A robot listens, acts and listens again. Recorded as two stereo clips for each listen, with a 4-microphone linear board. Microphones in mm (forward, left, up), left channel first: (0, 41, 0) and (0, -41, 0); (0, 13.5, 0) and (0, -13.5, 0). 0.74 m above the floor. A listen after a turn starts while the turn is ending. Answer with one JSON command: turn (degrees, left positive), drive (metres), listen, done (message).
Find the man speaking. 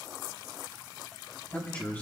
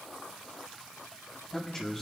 {"turn": 20}
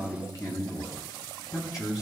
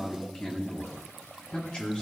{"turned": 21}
{"turn": 135}
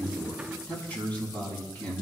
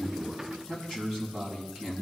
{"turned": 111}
{"turn": 15}
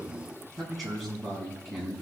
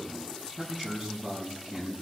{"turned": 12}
{"done": "Facing the man speaking."}